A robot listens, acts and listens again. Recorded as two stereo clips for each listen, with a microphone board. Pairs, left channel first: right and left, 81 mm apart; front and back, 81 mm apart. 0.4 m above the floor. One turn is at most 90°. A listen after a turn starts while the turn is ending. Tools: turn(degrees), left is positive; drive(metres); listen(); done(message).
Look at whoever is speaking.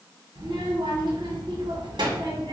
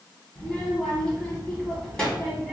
turn(degrees=80)
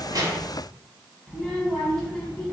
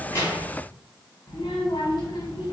done("Found it: a child speaking, straight ahead, 2 to 4 m away.")